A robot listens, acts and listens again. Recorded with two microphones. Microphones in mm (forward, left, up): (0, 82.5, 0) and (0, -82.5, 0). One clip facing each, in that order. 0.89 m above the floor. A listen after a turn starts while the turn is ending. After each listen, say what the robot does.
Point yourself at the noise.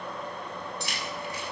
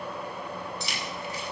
Turn 70° left.
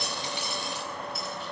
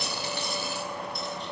Keep listening.
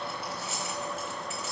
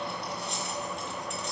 Facing the keys jangling.